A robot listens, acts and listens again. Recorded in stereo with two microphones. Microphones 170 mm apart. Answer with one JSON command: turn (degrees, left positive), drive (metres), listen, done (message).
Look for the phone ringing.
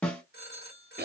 {"turn": 70}
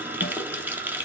{"listen": true}
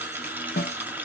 {"listen": true}
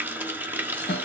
{"done": "I heard a phone ringing, but can't make it out now. It was about straight ahead or 40° left."}